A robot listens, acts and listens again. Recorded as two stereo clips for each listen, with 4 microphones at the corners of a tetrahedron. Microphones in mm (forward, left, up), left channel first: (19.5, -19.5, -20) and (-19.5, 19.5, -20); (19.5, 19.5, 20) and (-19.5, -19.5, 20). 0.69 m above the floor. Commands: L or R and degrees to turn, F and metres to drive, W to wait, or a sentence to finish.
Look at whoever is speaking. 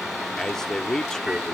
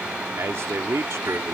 R120
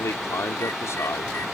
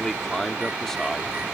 R35
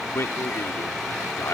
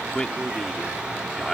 R30
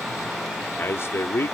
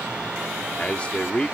R20
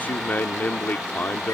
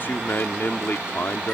Found it: a man speaking, straight ahead.